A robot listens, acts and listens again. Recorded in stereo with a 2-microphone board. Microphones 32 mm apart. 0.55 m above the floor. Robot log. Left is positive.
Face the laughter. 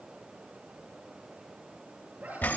note: The laughter: about 70° right or 110° right.
cmd yaw -70
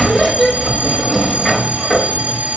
cmd idle
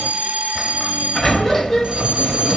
cmd idle
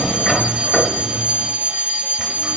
end: I heard laughter, but can't make it out now. It was about straight ahead or 40° right.